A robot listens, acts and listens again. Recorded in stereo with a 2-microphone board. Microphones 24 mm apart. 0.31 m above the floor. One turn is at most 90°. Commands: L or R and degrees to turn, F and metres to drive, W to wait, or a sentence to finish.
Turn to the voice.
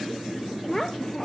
L15
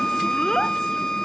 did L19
W
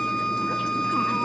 W
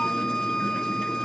I heard a child speaking, but can't make it out now. It was about 5° right or 145° left.